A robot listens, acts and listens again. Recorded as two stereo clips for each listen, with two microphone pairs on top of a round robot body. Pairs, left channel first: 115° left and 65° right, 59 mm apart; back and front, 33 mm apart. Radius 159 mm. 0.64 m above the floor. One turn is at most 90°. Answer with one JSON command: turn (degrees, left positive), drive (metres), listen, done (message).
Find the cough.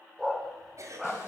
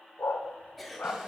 {"turn": -90}
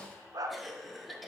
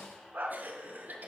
{"turn": 25}
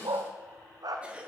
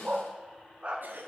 {"done": "Facing the cough."}